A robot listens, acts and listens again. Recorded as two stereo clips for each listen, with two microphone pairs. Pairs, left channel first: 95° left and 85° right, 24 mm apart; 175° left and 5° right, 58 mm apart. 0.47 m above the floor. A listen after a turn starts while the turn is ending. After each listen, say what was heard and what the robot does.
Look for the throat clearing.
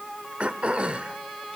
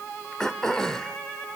The throat clearing: 105° right. Turn 105° right.
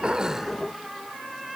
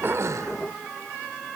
Keep listening.
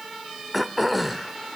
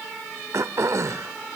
Found it: throat clearing, straight ahead.